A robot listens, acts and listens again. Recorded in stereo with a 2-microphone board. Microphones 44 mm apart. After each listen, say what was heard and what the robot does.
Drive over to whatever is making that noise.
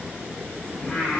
The singing: about 30° left or 150° left. Turn 30° left.
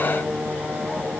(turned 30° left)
So it is at 120° left. Turn 120° left.
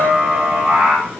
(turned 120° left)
The singing is now 10° right. Turn 10° right.
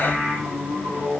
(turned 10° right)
Drive 1.0 m forward.
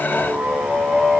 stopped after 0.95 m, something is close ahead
Arrived at the singing, straight ahead.